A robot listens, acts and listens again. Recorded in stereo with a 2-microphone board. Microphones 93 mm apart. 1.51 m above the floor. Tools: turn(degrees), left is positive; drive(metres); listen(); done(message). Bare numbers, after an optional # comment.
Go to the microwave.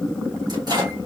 # The microwave: about 45° right or 135° right.
turn(-45)
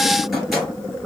drive(1.0)
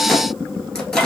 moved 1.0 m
# The microwave is now 10° left.
turn(10)
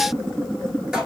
drive(1.0)
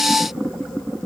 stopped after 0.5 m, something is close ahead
listen()
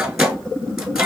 done("Arrived at the microwave, straight ahead.")